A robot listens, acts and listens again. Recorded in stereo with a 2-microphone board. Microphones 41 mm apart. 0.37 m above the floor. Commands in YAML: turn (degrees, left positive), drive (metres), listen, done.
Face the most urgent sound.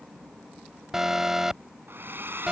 turn: -30
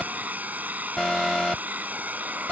turn: 15
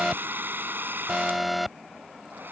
done: "Facing the alarm."